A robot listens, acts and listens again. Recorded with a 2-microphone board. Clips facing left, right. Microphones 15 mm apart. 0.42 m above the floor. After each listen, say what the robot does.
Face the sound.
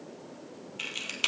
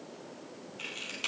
Turn 40° left.
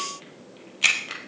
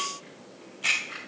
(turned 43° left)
Turn 100° left.
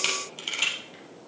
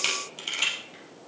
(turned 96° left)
Facing the camera shutter, 2 to 4 m away.